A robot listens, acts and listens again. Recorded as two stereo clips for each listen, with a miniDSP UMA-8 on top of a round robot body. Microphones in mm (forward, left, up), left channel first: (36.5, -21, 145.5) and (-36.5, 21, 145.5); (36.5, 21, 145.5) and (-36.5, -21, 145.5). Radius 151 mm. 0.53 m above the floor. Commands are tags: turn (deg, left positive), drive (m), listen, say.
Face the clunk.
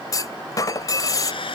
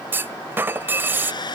<turn deg="-80"/>
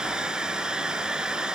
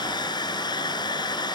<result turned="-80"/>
<say>Facing where the clunk came from. I can't hear it now.</say>